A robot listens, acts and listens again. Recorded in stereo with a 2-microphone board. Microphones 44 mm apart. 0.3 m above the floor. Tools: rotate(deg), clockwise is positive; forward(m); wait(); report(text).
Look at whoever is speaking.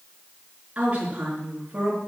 rotate(30)
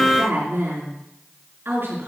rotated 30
rotate(120)
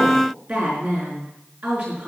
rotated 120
rotate(40)
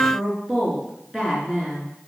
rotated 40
rotate(15)
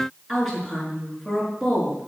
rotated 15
report("Found it: a woman speaking, straight ahead.")